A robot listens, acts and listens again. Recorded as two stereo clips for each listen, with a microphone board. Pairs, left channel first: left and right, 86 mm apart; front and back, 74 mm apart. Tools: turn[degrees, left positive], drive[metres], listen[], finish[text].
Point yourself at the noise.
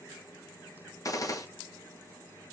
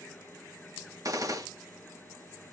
Thought: The gunshot: 140° left.
Action: turn[140]
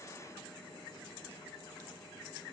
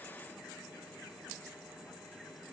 Action: finish[Facing where the gunshot came from. I can't hear it now.]